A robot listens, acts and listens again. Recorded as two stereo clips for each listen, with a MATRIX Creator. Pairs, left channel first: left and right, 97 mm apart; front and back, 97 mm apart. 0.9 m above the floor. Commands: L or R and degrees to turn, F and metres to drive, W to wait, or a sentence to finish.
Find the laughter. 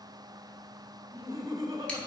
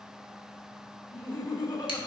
R35
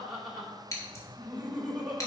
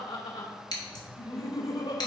R10
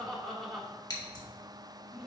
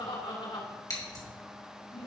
Found it: laughter, straight ahead.